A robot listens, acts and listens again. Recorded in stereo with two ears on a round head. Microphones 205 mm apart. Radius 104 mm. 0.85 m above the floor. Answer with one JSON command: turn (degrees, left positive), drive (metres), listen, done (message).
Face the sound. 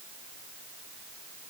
{"listen": true}
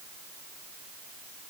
{"listen": true}
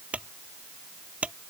{"turn": -30}
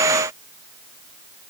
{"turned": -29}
{"listen": true}
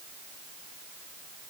{"done": "I heard a clunk, but can't make it out now. It was about 25° left or 145° right."}